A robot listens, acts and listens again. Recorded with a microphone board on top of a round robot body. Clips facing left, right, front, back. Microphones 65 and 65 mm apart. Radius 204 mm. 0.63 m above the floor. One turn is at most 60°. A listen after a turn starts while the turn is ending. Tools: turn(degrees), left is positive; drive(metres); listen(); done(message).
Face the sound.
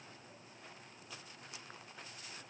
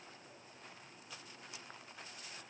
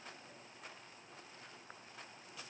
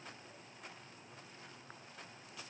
listen()
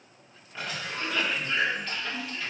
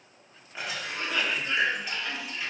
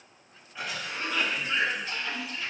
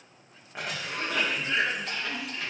turn(degrees=-60)
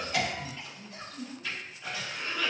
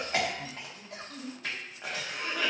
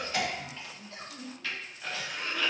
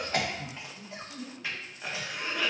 turn(degrees=-60)
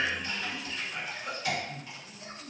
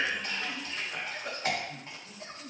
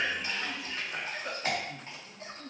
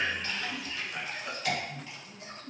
turn(degrees=-50)
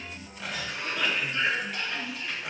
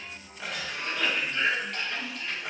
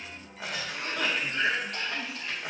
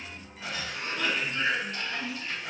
done("Found it: a cough, straight ahead.")